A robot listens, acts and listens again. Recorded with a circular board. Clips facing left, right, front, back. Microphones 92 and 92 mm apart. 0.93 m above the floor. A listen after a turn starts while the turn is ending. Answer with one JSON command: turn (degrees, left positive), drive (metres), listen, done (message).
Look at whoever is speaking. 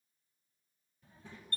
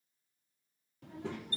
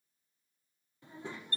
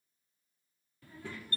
{"turn": -70}
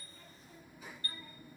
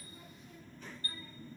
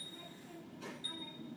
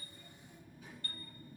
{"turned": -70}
{"turn": 10}
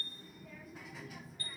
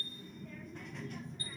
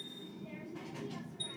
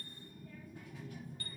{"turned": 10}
{"done": "Found it: a child speaking, straight ahead."}